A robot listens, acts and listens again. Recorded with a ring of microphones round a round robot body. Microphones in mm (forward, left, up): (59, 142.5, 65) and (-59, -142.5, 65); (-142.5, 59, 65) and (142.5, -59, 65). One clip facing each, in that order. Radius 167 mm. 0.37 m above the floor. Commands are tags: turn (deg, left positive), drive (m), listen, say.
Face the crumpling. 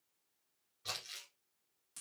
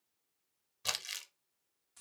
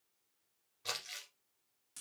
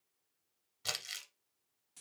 <turn deg="-85"/>
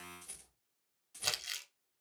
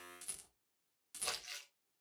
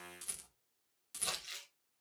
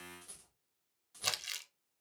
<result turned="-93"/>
<turn deg="10"/>
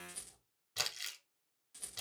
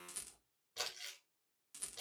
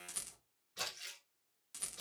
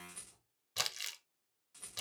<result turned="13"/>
<say>Found it: crumpling, straight ahead.</say>